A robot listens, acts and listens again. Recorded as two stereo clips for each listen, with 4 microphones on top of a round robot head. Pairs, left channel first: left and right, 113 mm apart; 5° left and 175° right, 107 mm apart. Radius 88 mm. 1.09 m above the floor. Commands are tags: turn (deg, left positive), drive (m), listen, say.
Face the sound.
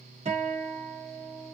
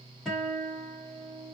<turn deg="-85"/>
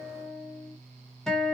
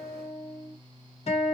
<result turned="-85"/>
<say>Facing the guitar, 1 to 2 m away.</say>